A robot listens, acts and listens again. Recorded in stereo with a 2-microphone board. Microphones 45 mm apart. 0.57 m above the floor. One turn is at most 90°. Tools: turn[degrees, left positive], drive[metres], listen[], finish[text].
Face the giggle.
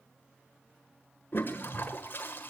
Action: listen[]
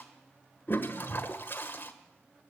Action: listen[]
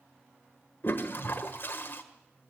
Action: finish[I can't make out a giggle to turn to.]